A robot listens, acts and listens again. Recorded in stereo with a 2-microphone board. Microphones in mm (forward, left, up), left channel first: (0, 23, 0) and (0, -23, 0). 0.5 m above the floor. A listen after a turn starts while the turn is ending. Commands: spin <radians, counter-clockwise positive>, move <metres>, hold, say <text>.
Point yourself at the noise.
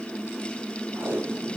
spin -0.87
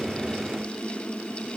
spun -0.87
hold
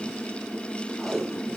say Found it: tape being pulled, straight ahead.